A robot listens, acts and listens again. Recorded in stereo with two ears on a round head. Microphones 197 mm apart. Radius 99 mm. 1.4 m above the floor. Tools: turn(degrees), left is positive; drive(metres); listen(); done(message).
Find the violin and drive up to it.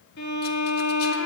turn(degrees=50)
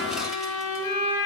turn(degrees=80)
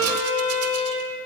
drive(metres=1.0)
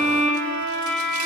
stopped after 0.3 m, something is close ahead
done("Something is in my way. I am facing the violin but have not reached it.")